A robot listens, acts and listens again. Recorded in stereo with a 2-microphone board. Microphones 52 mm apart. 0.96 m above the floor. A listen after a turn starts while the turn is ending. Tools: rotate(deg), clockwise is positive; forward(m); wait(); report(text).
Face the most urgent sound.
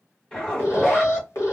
rotate(-75)
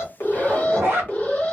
rotate(-30)
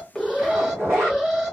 rotate(10)
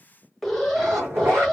report("Found it: an alarm, straight ahead, 1 to 2 m away.")